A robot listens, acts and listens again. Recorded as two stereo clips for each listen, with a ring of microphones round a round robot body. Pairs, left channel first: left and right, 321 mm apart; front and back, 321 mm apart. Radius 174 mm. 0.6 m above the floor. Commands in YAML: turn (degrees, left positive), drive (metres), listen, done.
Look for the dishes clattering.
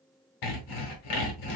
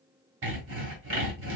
listen: true
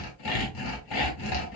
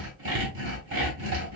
listen: true
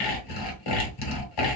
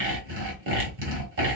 done: "I can't make out dishes clattering, only sawing."